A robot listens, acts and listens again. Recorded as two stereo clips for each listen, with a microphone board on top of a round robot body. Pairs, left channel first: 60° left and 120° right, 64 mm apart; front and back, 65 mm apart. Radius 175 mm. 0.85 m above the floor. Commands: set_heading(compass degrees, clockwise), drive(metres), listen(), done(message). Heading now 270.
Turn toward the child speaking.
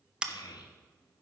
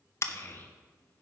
set_heading(210)
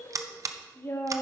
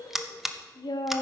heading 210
set_heading(200)
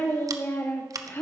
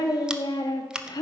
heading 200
done("Found it: a child speaking, straight ahead.")